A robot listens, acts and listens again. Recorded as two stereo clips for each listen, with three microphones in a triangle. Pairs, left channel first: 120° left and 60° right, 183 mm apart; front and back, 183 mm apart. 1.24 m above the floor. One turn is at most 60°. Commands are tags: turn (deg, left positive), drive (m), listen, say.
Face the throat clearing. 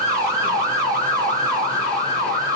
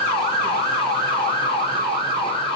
<listen/>
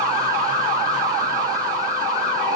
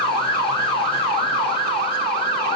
<listen/>
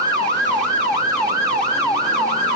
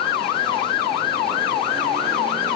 <say>I can't make out throat clearing.</say>